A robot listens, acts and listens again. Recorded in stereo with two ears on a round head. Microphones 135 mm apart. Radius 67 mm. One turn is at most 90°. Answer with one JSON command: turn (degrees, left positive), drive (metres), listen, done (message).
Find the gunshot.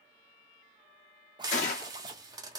{"turn": 50}
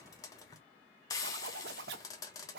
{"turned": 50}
{"listen": true}
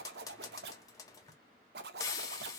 {"done": "I heard a gunshot, but can't make it out now. It was about straight ahead or 80° left."}